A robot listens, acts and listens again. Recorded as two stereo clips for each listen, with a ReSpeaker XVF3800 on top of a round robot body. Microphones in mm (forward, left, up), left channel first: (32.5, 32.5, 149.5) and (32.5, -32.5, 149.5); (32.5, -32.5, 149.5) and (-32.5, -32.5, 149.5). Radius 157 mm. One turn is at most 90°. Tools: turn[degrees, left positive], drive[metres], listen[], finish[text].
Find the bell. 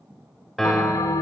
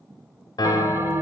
Thought: The bell: 125° left.
Action: turn[90]
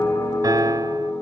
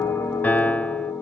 Thought: The bell is now 55° left.
Action: turn[55]
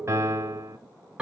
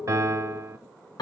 Thought: The bell is now 15° right.
Action: turn[-15]
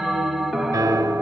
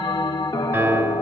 Action: finish[Facing the bell.]